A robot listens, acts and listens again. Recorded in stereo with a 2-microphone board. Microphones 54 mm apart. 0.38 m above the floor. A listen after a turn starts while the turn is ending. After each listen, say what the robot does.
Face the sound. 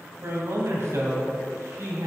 Turn 70° right.
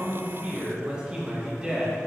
Turn 15° right.
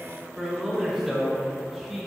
Found it: a man speaking, straight ahead, over 4 m away.